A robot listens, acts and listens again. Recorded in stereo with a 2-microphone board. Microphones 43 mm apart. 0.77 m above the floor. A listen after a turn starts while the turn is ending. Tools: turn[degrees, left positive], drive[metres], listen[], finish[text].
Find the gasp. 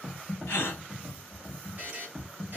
Thought: The gasp: about 70° left or 110° left.
Action: turn[70]
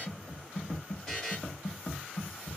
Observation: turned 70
Action: listen[]
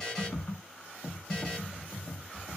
Action: finish[I heard a gasp, but can't make it out now. It was about straight ahead or 40° left.]